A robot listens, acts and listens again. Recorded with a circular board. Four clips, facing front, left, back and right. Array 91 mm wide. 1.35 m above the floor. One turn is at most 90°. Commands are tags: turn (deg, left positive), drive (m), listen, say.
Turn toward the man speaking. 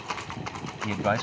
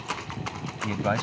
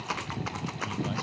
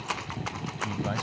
<turn deg="35"/>
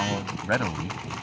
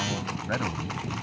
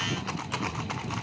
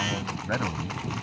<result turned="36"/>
<say>Facing the man speaking.</say>